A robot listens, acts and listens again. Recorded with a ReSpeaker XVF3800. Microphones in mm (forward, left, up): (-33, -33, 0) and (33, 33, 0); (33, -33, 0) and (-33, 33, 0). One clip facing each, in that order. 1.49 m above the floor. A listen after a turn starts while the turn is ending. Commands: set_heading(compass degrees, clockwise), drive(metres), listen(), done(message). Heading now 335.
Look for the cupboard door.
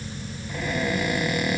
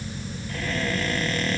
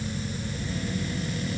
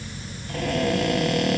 set_heading(190)
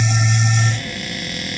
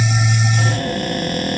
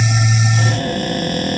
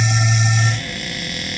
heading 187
done("Facing the cupboard door.")